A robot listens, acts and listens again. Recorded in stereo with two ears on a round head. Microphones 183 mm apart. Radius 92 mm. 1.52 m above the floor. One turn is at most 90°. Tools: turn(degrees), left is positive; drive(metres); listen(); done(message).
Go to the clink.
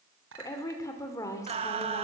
turn(degrees=-65)
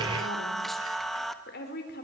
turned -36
listen()
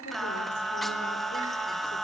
listen()
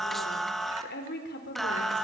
done("I heard a clink, but can't make it out now. It was about 30° right or 80° right. I did not reach it.")